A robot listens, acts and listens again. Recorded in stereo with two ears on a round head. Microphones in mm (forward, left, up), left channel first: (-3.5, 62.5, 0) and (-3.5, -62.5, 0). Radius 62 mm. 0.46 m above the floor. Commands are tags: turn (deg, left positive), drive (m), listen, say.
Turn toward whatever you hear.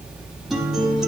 <turn deg="30"/>
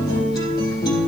<turn deg="150"/>
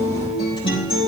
<turn deg="35"/>
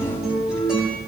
<say>Facing the guitar.</say>